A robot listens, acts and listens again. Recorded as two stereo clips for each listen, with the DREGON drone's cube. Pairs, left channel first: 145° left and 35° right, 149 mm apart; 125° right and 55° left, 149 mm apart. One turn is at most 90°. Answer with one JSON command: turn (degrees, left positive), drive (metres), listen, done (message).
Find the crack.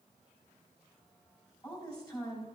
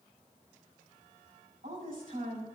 {"listen": true}
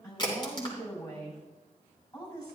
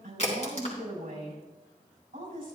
{"turn": -90}
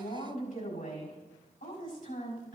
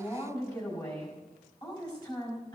{"turn": -70}
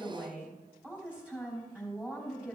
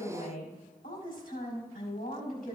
{"done": "Facing where the crack came from. I can't hear it now."}